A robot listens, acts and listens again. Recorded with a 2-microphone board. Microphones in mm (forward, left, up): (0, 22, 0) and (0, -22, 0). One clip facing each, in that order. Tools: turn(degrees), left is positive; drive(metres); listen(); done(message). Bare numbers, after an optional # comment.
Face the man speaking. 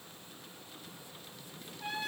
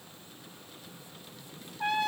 listen()
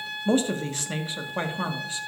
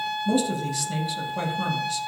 # The man speaking: about 30° left or 150° left.
turn(30)
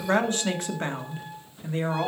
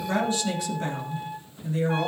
# The man speaking: about 35° left or 145° left.
turn(35)
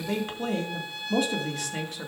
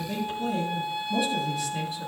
# So it is at 115° left.
turn(115)
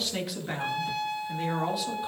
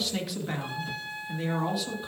done("Facing the man speaking.")